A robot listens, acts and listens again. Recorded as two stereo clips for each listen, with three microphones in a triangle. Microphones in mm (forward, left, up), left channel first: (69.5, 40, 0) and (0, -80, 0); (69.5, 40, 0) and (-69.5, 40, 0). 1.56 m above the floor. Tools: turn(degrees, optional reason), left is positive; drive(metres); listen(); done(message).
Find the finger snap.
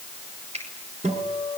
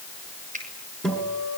turn(degrees=-160, reason="The finger snap: 160° right.")
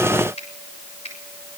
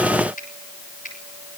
turn(degrees=20, reason="The finger snap is now 20° left.")
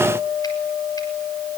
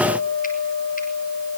listen()
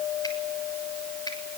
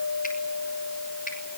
listen()
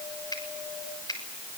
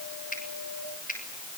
done("Facing the finger snap.")